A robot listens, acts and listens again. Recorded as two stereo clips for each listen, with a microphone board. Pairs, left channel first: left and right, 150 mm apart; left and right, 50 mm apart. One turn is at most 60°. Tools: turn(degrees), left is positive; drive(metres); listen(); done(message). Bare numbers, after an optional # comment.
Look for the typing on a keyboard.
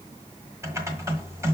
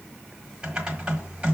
# The typing on a keyboard: about 20° right or 160° right.
turn(-20)
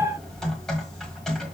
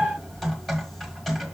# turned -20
done("Facing the typing on a keyboard, 1 to 2 m away.")